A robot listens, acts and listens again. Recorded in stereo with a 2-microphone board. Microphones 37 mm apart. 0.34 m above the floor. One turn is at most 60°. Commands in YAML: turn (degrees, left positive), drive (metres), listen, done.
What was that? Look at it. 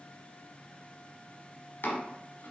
turn: 60
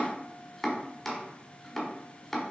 turn: 10
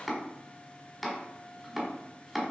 done: "Facing the chopping."